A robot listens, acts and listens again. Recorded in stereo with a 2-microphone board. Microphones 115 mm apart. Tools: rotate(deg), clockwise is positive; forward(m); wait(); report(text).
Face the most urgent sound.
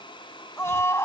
rotate(-25)
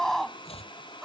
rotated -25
report("Facing the scream.")